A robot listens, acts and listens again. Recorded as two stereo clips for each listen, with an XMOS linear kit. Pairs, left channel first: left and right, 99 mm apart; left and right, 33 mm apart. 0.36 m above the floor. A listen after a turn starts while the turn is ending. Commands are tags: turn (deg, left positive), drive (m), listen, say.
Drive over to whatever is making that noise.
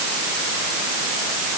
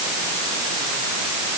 <listen/>
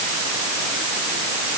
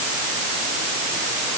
<listen/>
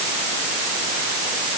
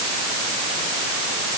<say>I can't make out anything.</say>